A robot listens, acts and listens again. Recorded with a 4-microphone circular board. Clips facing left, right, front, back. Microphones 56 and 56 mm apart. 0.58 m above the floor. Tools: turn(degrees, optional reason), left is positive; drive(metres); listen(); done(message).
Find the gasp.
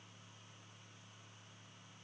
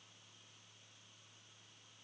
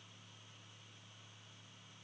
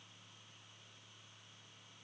listen()
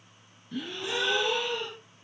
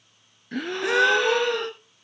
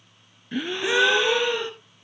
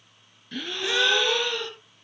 turn(degrees=-70, reason="The gasp: 70° right.")
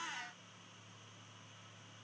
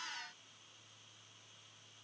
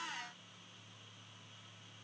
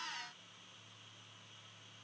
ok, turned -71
done("Facing where the gasp came from. I can't hear it now.")